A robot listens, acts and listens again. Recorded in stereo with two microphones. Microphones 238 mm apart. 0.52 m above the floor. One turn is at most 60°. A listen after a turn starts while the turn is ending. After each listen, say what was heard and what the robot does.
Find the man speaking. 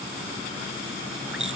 Keep listening.
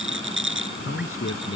The man speaking: about 70° left or 110° left. Turn 60° left.
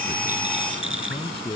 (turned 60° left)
So it is at 25° left. Turn 25° left.
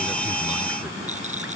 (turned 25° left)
Keep listening.
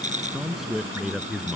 Facing the man speaking.